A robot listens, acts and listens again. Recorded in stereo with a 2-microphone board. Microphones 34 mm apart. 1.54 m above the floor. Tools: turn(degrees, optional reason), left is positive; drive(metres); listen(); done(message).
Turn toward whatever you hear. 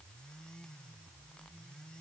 listen()
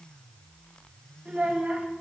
turn(degrees=-45, reason="The child speaking: about 45° right or 135° right.")
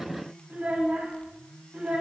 turn(degrees=-40, reason="The child speaking: about 40° right or 140° right.")
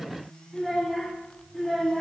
done("Found it: a child speaking, straight ahead.")